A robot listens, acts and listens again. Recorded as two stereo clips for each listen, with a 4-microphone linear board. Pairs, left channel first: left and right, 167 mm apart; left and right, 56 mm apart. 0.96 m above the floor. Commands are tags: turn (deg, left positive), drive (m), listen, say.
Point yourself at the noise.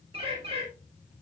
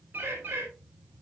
<turn deg="-35"/>
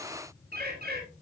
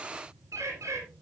<turn deg="-105"/>
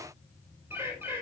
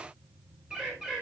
<turn deg="-15"/>
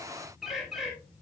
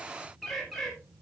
<say>Found it: a bird, straight ahead, 2 to 4 m away.</say>